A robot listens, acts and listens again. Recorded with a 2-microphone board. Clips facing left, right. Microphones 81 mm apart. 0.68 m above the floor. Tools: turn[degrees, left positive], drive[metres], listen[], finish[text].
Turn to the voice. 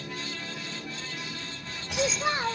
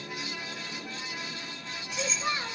Thought: The child speaking: about 35° left or 145° left.
Action: turn[35]
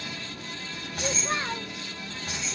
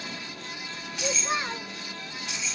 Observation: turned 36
Action: finish[Found it: a child speaking, straight ahead, 1 to 2 m away.]